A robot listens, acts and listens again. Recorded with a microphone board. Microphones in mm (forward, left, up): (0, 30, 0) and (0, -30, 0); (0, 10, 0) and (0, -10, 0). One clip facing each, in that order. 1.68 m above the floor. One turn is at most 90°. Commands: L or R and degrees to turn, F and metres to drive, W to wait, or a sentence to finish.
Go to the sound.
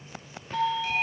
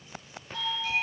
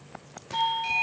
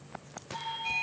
L65
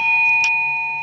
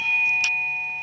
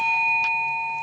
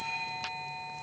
L45
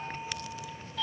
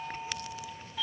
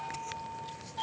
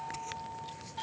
R10
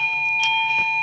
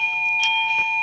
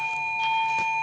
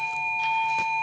F1.0
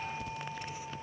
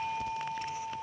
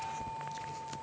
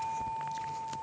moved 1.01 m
F1.0
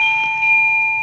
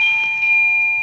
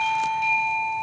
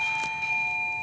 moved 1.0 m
L10
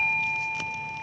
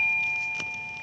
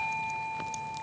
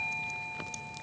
F1.0
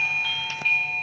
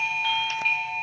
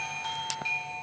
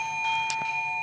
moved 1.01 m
F1.0
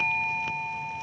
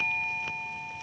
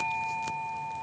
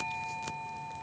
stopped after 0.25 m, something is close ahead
Arrived at the doorbell, straight ahead.